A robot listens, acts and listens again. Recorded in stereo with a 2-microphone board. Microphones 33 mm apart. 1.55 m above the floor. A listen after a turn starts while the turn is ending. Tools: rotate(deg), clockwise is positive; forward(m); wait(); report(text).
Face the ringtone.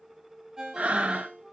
rotate(20)
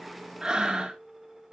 wait()
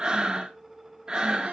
wait()
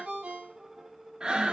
rotate(145)
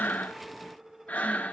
wait()
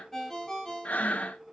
rotate(-10)
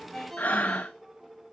report("Facing the ringtone, 2 to 4 m away.")